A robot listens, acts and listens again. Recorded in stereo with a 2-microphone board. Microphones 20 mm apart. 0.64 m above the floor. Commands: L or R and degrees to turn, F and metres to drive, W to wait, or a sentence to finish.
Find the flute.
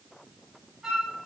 R30
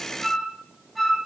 Facing the flute, over 4 m away.